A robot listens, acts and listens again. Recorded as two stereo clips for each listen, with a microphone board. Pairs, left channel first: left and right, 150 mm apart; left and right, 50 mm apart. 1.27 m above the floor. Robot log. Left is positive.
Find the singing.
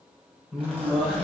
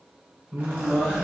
cmd yaw +30
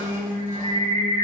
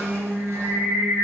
note: So it is at 40° right.
cmd yaw -40
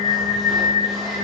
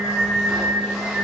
note: The singing is now 15° right.
cmd yaw -15
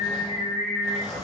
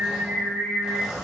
note: The singing is now 15° right.
cmd yaw -15
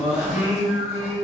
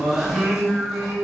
note: The singing is now 10° right.
cmd yaw -10
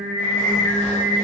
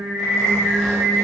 end: Facing the singing.